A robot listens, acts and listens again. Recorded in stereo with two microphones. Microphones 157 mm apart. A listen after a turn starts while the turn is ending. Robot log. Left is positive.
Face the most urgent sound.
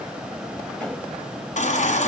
note: The baby crying: about 55° left or 125° left.
cmd yaw +55
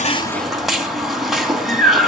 end: Facing the baby crying, 2 to 4 m away.